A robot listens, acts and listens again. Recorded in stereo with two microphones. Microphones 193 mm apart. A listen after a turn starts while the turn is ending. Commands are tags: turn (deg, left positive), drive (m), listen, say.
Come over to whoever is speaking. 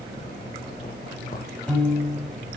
<listen/>
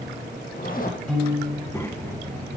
<turn deg="30"/>
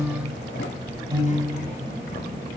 <turn deg="135"/>
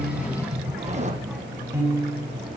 <drive m="1.0"/>
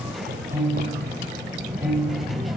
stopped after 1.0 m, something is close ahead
<say>Arrived at the child speaking, straight ahead.</say>